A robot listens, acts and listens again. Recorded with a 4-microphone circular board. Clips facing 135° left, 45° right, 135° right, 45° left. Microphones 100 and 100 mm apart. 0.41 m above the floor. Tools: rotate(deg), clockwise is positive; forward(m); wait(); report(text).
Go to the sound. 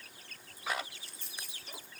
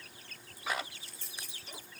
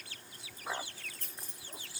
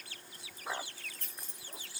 rotate(-170)
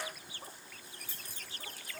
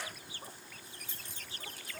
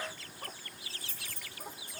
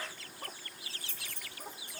rotate(-25)
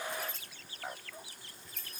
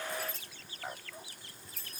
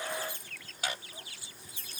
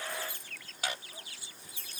forward(1.0)
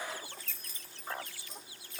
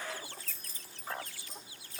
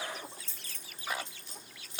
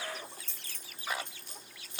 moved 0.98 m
forward(1.0)
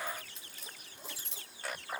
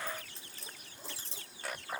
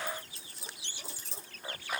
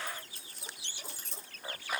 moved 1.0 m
forward(1.0)
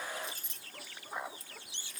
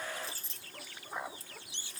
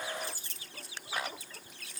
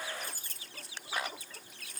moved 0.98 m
rotate(-10)
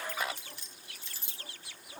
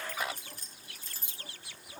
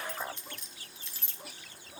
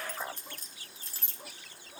forward(1.0)
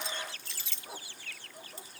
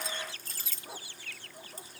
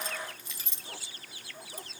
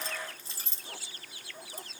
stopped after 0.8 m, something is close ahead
report("Arrived at the keys jangling, straight ahead.")